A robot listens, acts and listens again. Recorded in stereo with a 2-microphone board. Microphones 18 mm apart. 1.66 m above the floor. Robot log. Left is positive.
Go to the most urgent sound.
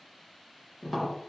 cmd idle
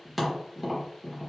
cmd idle
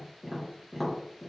end: I can't make out anything urgent, only tapping.